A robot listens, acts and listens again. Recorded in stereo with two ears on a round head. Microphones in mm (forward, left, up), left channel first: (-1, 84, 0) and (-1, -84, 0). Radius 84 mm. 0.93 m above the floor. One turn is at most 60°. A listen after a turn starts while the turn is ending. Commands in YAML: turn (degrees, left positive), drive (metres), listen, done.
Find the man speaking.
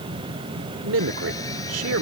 turn: -60
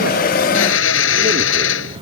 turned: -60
turn: -30
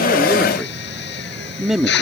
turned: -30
done: "Found it: a man speaking, straight ahead."